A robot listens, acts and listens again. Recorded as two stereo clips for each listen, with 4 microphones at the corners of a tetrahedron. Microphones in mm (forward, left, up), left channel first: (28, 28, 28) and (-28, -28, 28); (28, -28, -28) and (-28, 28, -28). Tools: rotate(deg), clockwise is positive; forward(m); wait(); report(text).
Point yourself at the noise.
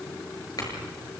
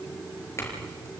rotate(-10)
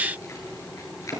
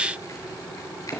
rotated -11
report("Facing the clink, over 4 m away.")